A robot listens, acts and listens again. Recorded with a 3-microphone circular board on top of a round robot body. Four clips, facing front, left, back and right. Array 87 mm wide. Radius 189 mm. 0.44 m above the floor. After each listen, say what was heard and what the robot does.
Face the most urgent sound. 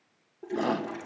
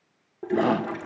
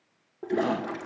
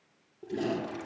The shout: 85° left. Turn 85° left.
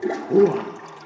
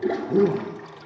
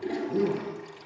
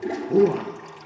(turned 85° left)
The shout is now 15° right. Turn 15° right.
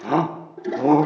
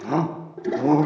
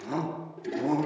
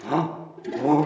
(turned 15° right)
Found it: a shout, straight ahead, 1 to 2 m away.